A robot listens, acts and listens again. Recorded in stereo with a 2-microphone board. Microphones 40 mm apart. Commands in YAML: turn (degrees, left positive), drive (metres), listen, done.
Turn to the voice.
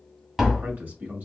turn: -45
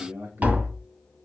turn: -80
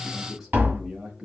turn: -15
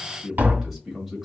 done: "Facing the man speaking."